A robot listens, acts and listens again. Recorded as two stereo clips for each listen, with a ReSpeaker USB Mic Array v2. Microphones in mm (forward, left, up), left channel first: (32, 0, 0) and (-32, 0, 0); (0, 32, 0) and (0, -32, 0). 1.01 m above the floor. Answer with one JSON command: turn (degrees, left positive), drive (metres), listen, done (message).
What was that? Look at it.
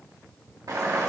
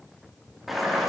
{"turn": 180}
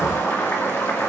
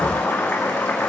{"turn": 40}
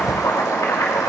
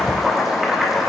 {"done": "Found it: boiling, straight ahead, 1 to 2 m away."}